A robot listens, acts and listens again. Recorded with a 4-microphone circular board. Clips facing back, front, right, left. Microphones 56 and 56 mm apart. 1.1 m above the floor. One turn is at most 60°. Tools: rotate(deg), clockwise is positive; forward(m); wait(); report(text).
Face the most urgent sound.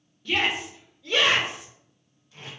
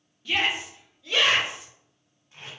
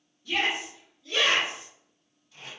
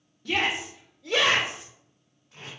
rotate(-60)
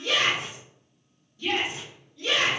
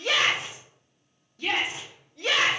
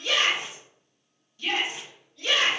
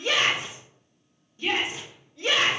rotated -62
rotate(-25)
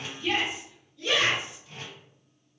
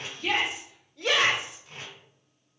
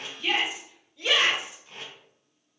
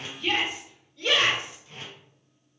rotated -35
rotate(10)
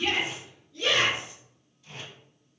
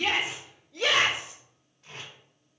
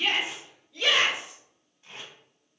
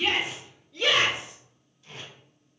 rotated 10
report("Facing the shout, 1 to 2 m away.")